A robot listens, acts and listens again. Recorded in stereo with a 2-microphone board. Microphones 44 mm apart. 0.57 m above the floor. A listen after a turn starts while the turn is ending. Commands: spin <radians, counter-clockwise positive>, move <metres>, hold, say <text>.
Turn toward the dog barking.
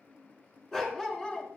spin 0.35
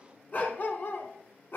spin 2.18
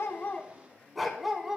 spin -0.17
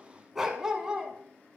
spin -0.35
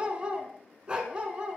spin -0.44
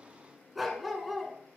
say Found it: a dog barking, straight ahead, 1 to 2 m away.